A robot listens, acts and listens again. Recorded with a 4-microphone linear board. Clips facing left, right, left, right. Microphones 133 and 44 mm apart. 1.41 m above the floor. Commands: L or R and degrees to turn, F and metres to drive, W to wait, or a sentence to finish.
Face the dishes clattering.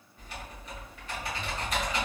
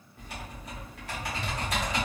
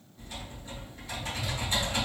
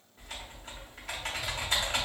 W
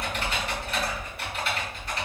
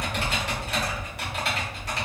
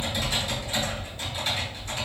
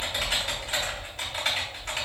W
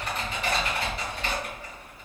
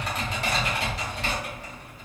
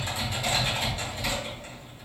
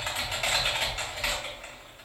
I can't make out dishes clattering, only typing on a keyboard.